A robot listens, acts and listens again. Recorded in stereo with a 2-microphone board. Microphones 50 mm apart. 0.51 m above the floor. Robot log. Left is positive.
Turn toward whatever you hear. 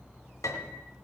cmd yaw +90
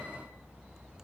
cmd idle
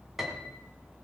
end: Found it: a piano, straight ahead.